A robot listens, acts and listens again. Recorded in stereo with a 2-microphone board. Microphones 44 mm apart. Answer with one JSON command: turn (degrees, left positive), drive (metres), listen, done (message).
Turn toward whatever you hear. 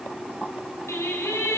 {"turn": 90}
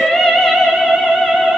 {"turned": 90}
{"done": "Found it: singing, straight ahead."}